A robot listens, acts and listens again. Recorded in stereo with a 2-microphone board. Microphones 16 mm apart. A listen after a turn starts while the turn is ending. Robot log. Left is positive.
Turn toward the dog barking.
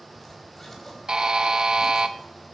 cmd idle
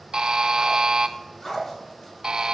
note: The dog barking: about 20° left or 160° left.
cmd yaw +20
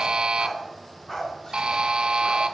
note: The dog barking: about 15° left or 165° left.
cmd yaw +15
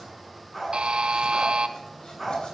cmd yaw +30
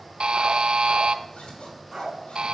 note: So it is at 20° right.
cmd yaw -20
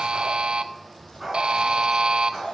end: Found it: a dog barking, straight ahead.